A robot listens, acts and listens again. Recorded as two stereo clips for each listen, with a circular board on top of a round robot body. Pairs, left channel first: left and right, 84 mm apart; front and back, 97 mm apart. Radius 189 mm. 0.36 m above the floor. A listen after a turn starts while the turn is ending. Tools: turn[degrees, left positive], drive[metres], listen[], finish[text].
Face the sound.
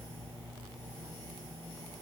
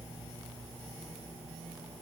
Action: listen[]
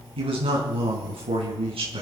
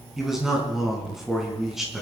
Thought: The man speaking: 95° right.
Action: turn[-95]
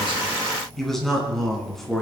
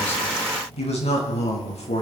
Action: finish[Facing the man speaking.]